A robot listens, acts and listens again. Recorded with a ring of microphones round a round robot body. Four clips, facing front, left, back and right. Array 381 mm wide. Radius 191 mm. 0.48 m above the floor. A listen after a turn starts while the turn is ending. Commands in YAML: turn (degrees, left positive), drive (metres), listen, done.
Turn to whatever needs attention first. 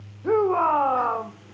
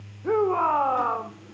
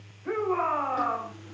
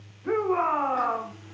turn: 30
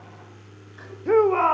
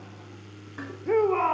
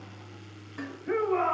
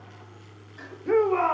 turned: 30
done: "Facing the shout."